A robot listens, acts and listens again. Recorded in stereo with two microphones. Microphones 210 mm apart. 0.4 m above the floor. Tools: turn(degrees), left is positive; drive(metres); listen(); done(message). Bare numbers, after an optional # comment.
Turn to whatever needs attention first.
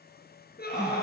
# The scream: about 50° left or 130° left.
turn(50)
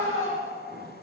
# So it is at 80° left.
turn(80)
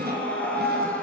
done("Facing the scream.")